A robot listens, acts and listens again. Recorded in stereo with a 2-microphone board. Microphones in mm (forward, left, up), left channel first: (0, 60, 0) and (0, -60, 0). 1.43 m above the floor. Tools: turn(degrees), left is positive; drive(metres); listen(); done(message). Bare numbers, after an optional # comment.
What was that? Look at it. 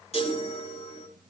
# The chime: about 60° left or 120° left.
turn(60)
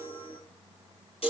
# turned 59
# So it is at 55° left.
turn(55)
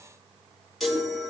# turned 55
done("Found it: a chime, straight ahead, over 4 m away.")